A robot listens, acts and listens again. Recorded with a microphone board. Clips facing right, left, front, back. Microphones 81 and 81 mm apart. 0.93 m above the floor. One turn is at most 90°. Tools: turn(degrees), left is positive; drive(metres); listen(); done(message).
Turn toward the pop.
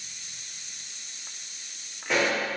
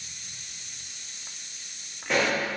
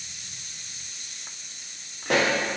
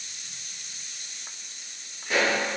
done("Facing the pop, 1 to 2 m away.")